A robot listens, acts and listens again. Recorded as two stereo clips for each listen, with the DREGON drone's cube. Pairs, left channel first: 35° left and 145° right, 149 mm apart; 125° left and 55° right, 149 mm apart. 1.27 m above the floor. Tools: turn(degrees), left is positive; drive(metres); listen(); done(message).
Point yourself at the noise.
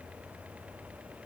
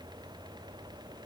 listen()
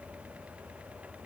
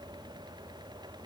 listen()
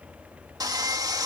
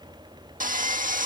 turn(degrees=-80)
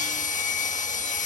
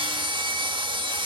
done("Facing the sawing.")